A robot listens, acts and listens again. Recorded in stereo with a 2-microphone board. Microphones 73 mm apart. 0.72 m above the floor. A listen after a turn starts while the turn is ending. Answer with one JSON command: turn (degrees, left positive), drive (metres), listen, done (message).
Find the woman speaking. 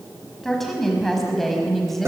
{"turn": 30}
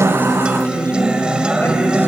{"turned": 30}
{"listen": true}
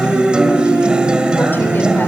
{"listen": true}
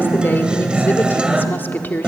{"turn": 155}
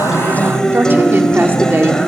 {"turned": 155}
{"turn": -30}
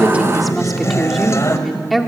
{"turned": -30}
{"done": "Facing the woman speaking, 1 to 2 m away."}